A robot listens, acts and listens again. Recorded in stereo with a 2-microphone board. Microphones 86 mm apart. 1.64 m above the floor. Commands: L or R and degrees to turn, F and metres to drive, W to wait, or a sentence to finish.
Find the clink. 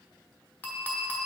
L20
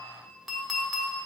Found it: a clink, straight ahead.